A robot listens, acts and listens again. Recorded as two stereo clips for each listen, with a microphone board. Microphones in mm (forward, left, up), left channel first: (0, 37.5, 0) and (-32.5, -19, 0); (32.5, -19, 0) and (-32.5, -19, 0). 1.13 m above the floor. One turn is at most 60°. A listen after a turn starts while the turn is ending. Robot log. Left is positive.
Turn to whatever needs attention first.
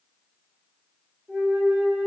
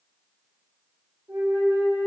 cmd idle
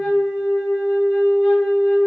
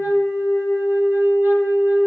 cmd idle
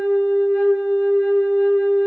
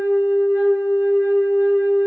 end: I can't make out anything urgent, only a flute.